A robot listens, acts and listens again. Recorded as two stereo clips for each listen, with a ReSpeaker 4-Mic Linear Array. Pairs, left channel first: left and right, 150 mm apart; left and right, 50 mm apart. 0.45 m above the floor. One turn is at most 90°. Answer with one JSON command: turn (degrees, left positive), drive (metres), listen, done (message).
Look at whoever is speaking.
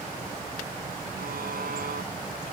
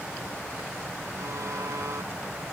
{"listen": true}
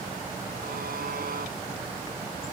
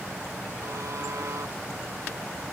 {"listen": true}
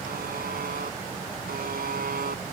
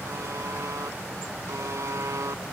{"done": "I can't make out anyone speaking, only a buzzer."}